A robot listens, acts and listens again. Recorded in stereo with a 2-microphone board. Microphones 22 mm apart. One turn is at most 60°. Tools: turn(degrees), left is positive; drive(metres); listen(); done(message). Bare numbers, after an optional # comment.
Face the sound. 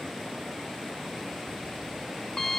# The alarm clock: about 40° left or 140° left.
turn(40)
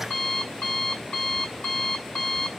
# So it is at 105° left.
turn(60)
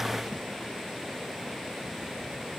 # Nothing new. It was at 45° left.
turn(45)
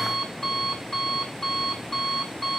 # The alarm clock is now 20° left.
turn(20)
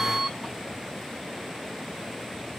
done("Found it: an alarm clock, straight ahead, over 4 m away.")